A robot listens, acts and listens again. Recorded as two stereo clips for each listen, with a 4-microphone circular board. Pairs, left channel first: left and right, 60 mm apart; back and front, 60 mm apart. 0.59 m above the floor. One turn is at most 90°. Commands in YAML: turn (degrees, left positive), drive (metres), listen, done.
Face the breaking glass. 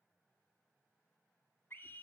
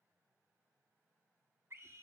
listen: true
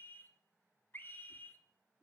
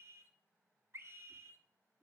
listen: true
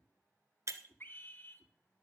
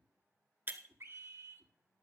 turn: -55
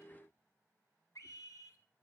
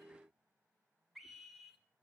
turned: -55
done: "Facing where the breaking glass came from. I can't hear it now."